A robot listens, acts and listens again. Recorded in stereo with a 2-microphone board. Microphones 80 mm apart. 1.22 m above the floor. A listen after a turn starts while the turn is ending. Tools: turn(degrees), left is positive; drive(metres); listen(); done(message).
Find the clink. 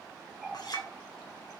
turn(degrees=60)
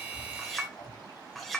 done("Found it: a clink, straight ahead.")